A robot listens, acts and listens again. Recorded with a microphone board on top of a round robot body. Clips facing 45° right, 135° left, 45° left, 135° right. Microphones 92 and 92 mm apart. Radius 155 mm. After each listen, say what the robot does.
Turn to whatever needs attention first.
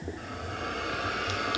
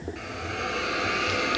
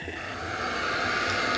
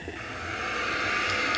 Keep listening.
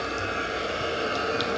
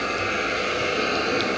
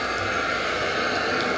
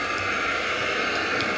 Keep listening.
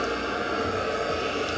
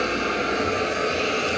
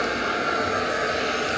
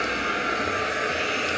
I can't make out anything urgent, only a hiss.